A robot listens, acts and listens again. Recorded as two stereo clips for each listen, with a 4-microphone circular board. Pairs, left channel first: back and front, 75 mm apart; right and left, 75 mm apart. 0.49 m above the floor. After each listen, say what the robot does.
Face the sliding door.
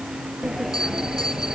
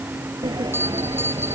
Turn 85° left.
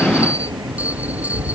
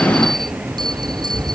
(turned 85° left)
Facing the sliding door.